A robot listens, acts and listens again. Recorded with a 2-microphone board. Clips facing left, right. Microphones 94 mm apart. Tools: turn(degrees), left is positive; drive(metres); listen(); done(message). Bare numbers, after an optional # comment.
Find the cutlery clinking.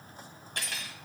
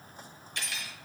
# The cutlery clinking: about 45° left or 135° left.
turn(45)
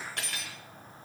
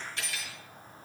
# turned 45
# So it is at 75° left.
turn(75)
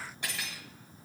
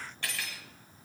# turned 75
# The cutlery clinking is now 20° left.
turn(20)
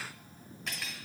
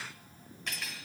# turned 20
done("Found it: cutlery clinking, straight ahead.")